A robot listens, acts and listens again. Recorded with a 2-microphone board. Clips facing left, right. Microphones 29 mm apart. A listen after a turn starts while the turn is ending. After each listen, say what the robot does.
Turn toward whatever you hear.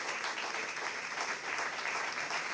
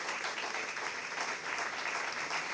Keep listening.
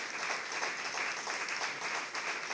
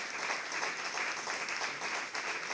Keep listening.
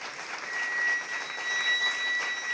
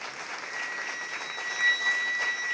Turn 30° left.
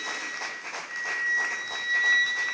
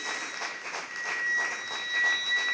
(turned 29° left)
Turn 150° left.
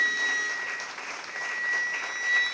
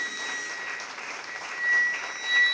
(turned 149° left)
Facing the flute.